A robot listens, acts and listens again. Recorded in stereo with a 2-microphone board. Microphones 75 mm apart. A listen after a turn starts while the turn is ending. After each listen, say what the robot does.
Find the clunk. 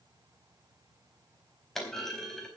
Turn 30° left.
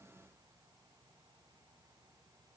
Keep listening.
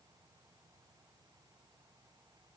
I heard a clunk, but can't make it out now. It was about 25° right or 145° left.